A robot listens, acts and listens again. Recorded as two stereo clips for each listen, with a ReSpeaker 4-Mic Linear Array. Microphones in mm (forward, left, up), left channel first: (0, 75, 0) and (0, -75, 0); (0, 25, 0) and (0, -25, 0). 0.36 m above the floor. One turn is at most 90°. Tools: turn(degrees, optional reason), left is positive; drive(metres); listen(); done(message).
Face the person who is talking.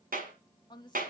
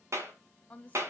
turn(degrees=30, reason="The woman speaking: about 30° left or 150° left.")
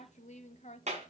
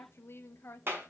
turn(degrees=90, reason="So it is at 115° left.")
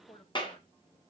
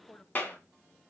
turn(degrees=30, reason="The woman speaking is now 30° left.")
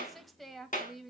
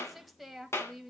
done("Found it: a woman speaking, straight ahead, 1 to 2 m away.")